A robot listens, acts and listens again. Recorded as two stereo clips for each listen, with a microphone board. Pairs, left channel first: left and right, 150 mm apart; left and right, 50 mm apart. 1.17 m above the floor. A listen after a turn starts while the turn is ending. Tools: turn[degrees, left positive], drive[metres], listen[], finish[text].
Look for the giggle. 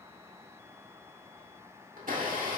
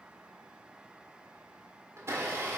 Action: listen[]
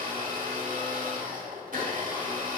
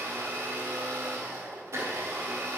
Action: listen[]
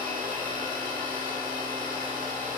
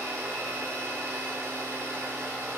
Action: finish[I can't make out a giggle to turn to.]